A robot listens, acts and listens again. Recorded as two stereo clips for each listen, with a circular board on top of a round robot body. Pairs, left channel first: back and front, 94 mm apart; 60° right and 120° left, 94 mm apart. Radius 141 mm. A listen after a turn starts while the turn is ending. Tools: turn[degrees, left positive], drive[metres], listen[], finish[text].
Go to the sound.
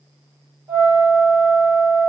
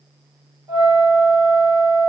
Thought: The flute: 75° left.
Action: turn[75]
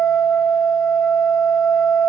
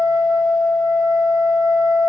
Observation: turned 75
Thought: The flute is now 30° left.
Action: turn[30]
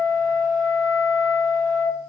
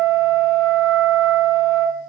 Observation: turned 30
Thought: The flute is now 10° left.
Action: turn[10]
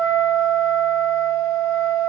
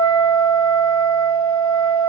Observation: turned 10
Thought: The flute is now 10° left.
Action: turn[10]
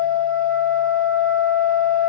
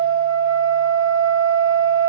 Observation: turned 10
Action: drive[1.0]
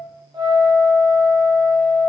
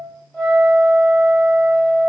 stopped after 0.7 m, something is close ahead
Thought: The flute is now 10° left.
Action: turn[10]
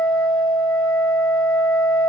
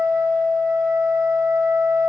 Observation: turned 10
Action: finish[I am next to the flute.]